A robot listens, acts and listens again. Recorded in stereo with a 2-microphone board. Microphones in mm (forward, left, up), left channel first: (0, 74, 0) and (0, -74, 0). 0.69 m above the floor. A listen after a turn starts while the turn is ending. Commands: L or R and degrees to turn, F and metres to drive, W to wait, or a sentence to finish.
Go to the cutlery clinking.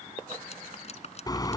L45
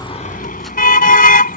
W
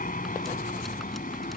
W
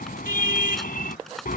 I heard cutlery clinking, but can't make it out now. It was about straight ahead or 90° left. I did not reach it.